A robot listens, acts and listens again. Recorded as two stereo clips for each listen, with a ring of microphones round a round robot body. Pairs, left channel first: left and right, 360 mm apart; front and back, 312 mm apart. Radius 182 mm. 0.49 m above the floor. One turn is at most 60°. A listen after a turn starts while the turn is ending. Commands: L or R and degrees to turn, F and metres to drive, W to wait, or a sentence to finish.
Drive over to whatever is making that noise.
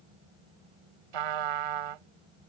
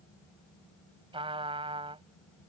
R60
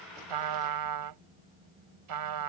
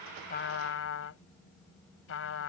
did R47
R55
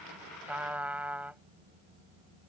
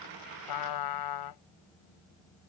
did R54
F1.0
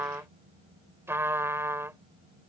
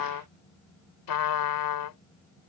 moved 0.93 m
F1.0
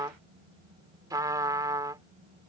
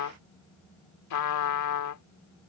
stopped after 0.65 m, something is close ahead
R10
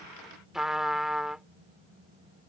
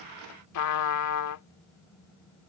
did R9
Arrived at the trumpet, straight ahead.